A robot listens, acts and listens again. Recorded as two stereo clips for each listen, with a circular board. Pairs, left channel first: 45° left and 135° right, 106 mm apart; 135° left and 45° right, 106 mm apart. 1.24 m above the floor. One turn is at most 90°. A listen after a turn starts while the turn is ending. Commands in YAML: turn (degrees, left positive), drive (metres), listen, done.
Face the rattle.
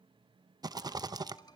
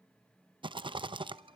turn: -85
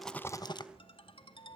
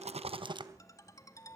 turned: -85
done: "Facing the rattle."